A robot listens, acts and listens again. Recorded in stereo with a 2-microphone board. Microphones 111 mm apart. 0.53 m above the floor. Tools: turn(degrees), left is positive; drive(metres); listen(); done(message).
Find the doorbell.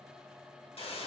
listen()
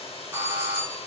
turn(degrees=-25)
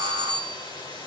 turn(degrees=-130)
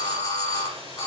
turn(degrees=35)
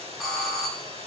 done("Facing the doorbell, 2 to 4 m away.")